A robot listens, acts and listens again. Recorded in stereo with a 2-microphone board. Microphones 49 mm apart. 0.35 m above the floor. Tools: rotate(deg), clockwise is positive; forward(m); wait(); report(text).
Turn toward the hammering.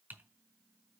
wait()
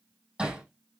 rotate(30)
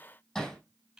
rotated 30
rotate(-15)
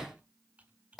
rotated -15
report("Found it: hammering, straight ahead, over 4 m away.")